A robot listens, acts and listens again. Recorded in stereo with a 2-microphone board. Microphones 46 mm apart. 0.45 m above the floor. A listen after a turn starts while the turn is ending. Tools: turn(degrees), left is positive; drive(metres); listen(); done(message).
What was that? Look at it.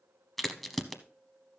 turn(degrees=30)
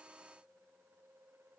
listen()
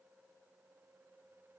done("I heard a crack, but can't make it out now. It was about 25° right or 145° left.")